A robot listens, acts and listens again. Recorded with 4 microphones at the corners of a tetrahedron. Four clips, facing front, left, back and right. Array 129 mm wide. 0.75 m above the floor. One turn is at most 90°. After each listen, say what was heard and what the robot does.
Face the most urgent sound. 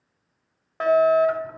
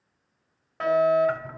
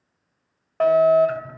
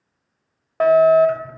The fire alarm: 100° right. Turn 90° right.
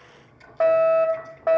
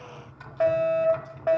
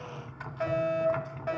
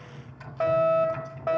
Found it: a fire alarm, straight ahead, 2 to 4 m away.